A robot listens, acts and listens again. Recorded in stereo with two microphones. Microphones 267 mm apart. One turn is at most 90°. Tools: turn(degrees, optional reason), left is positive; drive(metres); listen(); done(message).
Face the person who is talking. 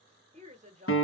turn(degrees=-25, reason="The woman speaking: about 25° right or 155° right.")
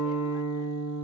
listen()
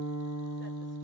listen()
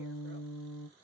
done("I heard a woman speaking, but can't make it out now. It was about straight ahead or 130° right.")